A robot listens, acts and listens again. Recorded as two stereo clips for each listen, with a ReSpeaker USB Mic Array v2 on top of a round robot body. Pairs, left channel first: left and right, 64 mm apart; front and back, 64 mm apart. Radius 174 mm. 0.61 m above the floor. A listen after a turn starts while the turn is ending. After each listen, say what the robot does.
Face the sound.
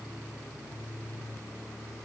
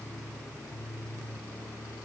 Keep listening.
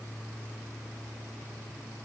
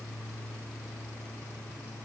Keep listening.
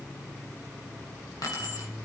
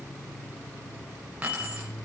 Turn 110° left.
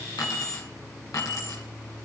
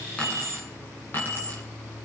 Turn 55° left.
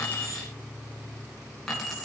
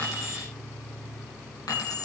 Facing the keys jangling, over 4 m away.